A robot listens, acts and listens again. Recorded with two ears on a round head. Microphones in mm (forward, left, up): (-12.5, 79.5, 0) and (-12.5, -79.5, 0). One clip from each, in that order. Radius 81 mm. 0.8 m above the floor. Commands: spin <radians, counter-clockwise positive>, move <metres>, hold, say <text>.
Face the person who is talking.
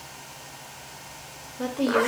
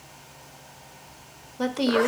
spin -0.96
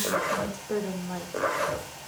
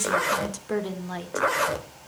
spin -0.87
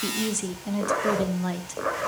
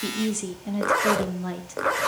spin 0.35
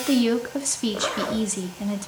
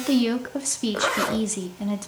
say Facing the woman speaking, 1 to 2 m away.